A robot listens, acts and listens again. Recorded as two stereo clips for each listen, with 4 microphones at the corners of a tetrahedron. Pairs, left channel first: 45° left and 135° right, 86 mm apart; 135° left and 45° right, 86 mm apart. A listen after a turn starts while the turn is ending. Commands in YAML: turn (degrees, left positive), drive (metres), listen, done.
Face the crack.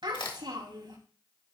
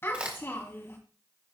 turn: 30
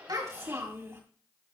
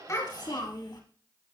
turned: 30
done: "Facing where the crack came from. I can't hear it now."